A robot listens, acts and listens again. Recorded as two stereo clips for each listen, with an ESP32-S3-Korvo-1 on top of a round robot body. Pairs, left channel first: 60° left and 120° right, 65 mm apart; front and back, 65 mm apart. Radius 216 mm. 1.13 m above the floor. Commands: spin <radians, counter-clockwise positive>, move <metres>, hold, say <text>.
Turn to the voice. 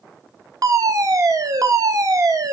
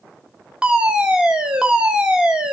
hold
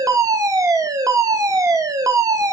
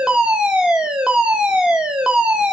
hold
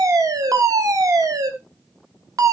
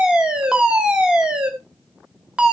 say I can't make out anyone speaking, only a fire alarm.